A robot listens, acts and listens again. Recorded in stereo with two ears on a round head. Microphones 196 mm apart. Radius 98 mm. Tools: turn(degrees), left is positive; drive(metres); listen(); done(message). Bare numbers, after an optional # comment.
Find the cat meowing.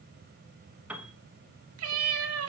# The cat meowing: about 75° right or 105° right.
turn(-75)
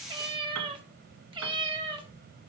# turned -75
# So it is at 25° right.
turn(-25)
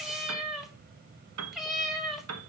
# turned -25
done("Found it: a cat meowing, straight ahead, 1 to 2 m away.")